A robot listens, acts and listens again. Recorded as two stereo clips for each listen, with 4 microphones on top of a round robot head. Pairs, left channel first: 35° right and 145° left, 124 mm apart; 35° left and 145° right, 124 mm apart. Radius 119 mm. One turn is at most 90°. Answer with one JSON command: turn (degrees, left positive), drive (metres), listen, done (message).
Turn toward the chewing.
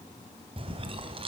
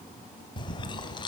{"turn": 90}
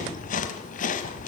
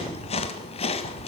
{"turn": -10}
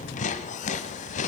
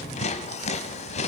{"done": "Facing the chewing, 1 to 2 m away."}